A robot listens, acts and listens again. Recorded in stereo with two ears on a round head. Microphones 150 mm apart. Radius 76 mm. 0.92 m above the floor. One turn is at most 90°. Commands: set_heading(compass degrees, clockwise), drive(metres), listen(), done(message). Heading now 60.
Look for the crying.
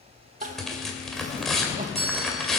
set_heading(105)
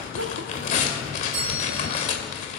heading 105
set_heading(195)
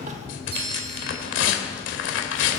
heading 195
listen()
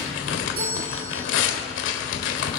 listen()
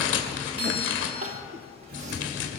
set_heading(240)
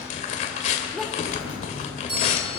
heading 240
done("Facing the crying, 1 to 2 m away.")